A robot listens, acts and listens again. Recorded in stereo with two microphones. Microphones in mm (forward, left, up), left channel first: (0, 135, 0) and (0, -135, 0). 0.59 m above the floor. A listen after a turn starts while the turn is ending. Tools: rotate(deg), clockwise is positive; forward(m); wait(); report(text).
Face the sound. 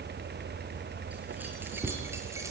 rotate(30)
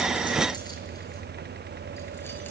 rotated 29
wait()
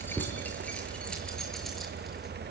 report("Found it: keys jangling, straight ahead, over 4 m away.")